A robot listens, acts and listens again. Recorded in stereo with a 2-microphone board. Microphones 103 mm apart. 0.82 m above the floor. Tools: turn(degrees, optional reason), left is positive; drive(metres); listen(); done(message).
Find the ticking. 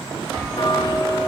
turn(degrees=40, reason="The ticking: about 40° left or 140° left.")
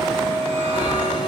turn(degrees=95, reason="So it is at 95° left.")
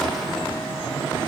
listen()
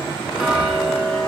done("Found it: ticking, straight ahead, 1 to 2 m away.")